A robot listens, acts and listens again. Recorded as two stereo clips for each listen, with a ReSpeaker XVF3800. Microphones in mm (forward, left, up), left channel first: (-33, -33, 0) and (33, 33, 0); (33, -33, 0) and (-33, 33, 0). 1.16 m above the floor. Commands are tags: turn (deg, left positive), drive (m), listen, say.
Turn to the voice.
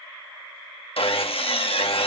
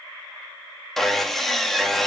<listen/>
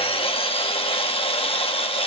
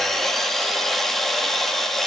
<listen/>
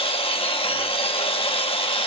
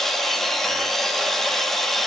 <say>I can't make out anyone speaking to turn to.</say>